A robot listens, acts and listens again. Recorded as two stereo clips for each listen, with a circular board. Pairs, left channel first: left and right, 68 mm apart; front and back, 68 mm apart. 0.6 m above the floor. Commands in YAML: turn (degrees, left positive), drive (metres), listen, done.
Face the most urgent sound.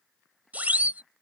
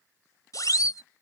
turn: -25
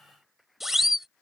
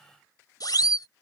done: "Found it: a siren, straight ahead."